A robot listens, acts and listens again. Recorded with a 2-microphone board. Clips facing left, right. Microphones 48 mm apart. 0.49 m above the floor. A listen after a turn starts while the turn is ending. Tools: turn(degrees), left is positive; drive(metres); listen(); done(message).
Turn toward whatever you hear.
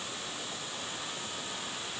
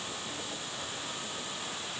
listen()
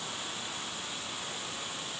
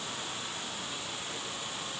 listen()
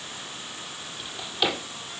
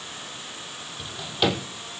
turn(degrees=-30)
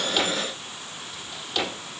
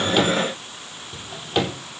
turn(degrees=-145)
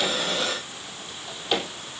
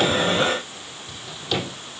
turn(degrees=25)
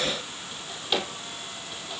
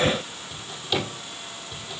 turn(degrees=15)
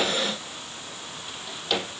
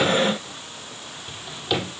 done("Found it: a drawer, straight ahead, over 4 m away.")